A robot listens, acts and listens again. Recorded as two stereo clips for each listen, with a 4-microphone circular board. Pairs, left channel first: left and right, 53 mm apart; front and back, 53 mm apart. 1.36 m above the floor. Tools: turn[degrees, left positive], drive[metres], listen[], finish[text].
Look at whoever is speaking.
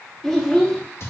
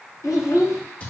Thought: The child speaking: 10° left.
Action: turn[10]
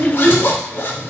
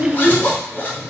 Action: finish[Facing the child speaking, under 1 m away.]